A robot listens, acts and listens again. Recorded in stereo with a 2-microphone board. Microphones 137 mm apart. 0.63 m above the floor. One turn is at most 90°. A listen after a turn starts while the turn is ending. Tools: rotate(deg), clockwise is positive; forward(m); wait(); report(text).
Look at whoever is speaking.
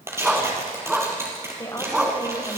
rotate(-25)
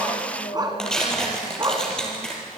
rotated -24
rotate(-90)
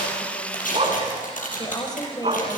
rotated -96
rotate(-30)
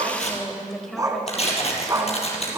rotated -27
report("Facing the woman speaking, 2 to 4 m away.")